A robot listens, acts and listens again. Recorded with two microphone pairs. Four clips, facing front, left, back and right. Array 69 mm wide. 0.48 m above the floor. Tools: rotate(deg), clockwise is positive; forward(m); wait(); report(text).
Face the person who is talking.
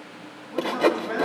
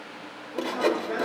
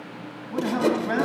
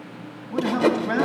rotate(135)
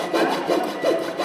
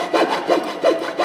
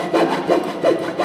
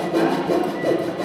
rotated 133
wait()
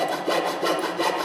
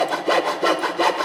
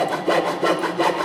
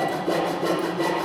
wait()
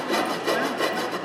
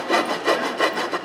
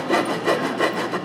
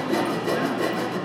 report("Facing where the man speaking came from. I can't hear it now.")